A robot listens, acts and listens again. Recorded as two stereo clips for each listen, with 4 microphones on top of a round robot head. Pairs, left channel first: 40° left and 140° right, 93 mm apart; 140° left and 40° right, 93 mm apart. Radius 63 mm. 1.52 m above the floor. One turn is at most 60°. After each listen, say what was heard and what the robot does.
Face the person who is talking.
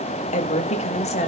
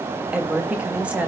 The woman speaking: 35° left. Turn 35° left.
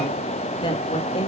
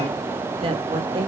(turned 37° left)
Facing the woman speaking, 2 to 4 m away.